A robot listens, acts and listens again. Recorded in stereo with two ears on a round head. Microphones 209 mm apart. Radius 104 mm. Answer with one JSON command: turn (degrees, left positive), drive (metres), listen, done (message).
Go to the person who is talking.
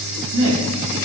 {"turn": -55}
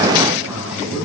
{"drive": 1.0}
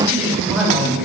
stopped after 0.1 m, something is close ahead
{"done": "Something is in my way. I am facing the man speaking but have not reached it."}